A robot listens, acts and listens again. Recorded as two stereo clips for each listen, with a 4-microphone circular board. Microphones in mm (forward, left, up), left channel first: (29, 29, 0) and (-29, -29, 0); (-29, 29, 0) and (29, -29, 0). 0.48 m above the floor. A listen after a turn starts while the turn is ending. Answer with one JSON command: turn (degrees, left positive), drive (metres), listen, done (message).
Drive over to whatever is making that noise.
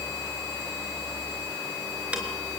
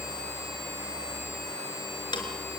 {"turn": 150}
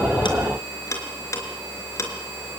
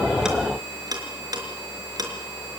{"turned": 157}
{"drive": 1.0}
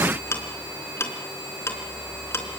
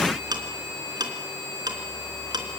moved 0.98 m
{"turn": -10}
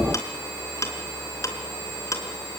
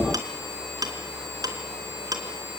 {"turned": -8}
{"drive": 1.0}
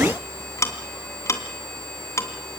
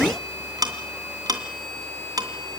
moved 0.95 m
{"drive": 1.0}
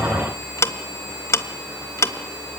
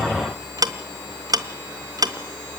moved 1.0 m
{"drive": 1.0}
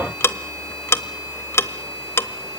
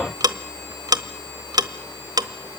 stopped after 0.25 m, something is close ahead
{"turn": -10}
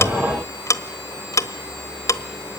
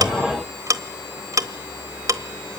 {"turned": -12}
{"done": "Arrived at the ticking, straight ahead."}